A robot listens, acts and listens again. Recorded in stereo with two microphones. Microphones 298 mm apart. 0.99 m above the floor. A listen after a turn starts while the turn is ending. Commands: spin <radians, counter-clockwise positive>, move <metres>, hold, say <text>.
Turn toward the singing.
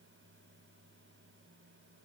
hold
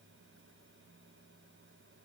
hold
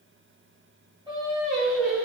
spin -0.44
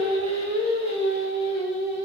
spin -2.09
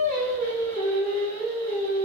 spin 0.35
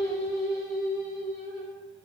say Found it: singing, straight ahead.